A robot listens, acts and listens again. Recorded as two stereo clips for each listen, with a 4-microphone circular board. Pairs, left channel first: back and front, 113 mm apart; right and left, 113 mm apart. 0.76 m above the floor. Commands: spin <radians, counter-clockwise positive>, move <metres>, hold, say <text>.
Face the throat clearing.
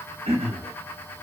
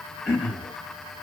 say Facing the throat clearing.